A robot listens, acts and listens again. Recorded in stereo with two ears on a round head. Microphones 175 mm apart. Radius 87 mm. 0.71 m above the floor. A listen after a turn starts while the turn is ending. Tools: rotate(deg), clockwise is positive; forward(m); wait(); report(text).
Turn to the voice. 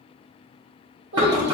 rotate(75)
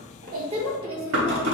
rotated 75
rotate(30)
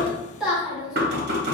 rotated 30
report("Facing the child speaking.")